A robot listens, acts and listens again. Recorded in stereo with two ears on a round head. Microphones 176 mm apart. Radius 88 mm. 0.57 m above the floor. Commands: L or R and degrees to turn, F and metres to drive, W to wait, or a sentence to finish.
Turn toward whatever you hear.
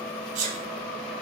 R40
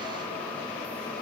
W
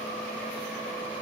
I heard a sneeze, but can't make it out now. It was about straight ahead or 100° right.